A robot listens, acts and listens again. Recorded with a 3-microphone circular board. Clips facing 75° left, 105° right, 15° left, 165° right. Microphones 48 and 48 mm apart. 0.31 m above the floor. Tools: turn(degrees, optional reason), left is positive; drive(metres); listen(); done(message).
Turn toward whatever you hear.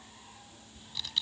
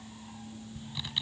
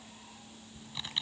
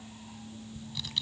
turn(degrees=-40, reason="The typing on a keyboard: 40° right.")
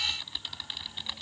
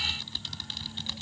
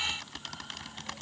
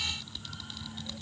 done("Found it: typing on a keyboard, straight ahead.")